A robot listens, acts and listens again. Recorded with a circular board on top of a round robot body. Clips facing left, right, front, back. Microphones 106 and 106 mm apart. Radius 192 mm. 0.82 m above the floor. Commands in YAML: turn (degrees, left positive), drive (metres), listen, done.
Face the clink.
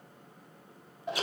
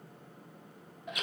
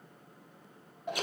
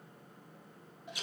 listen: true
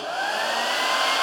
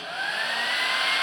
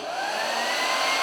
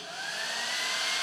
listen: true
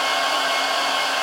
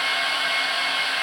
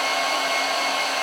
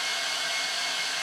done: "I can't make out a clink, only a hair dryer."